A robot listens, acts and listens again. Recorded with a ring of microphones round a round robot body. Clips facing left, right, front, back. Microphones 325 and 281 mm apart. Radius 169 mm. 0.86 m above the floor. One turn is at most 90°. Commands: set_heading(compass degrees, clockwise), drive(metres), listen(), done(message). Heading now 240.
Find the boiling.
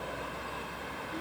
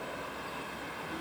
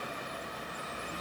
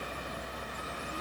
listen()
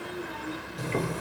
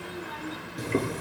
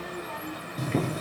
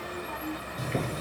set_heading(260)
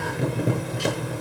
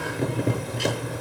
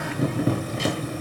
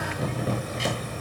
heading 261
done("Found it: boiling, straight ahead.")